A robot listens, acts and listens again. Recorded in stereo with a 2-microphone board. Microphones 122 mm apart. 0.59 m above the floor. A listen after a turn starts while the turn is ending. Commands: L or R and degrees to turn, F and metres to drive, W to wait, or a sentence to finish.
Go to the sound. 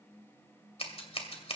L55
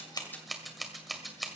F1.0
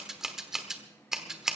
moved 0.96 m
F1.0
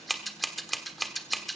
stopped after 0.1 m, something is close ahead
Arrived at the scissors, straight ahead.